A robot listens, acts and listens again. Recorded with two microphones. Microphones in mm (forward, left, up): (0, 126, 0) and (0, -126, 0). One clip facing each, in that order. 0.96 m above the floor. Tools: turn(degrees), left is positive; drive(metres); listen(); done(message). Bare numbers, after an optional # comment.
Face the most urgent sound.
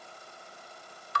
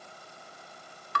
listen()
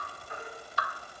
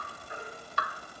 # The baby crying: about 25° right or 155° right.
turn(-25)
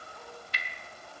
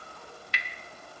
listen()
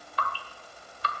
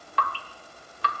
done("Facing the baby crying, over 4 m away.")